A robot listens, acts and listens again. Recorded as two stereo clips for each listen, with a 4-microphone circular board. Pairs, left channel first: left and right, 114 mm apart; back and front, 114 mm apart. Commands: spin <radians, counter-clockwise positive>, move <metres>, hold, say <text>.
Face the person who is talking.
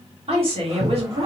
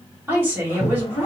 spin -1.13
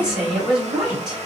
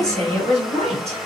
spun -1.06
say Found it: a woman speaking, straight ahead.